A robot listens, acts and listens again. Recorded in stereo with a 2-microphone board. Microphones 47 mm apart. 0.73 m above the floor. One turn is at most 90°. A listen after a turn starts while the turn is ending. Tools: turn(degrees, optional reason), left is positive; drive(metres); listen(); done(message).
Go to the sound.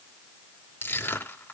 turn(degrees=60, reason="The crushing: about 60° left or 120° left.")
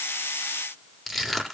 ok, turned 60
drive(metres=1.0)
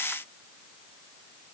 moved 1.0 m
listen()
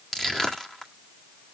turn(degrees=10, reason="The crushing is now 10° left.")
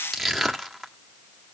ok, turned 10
drive(metres=1.0)
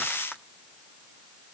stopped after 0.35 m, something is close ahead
listen()
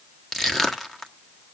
done("Arrived at the crushing, straight ahead.")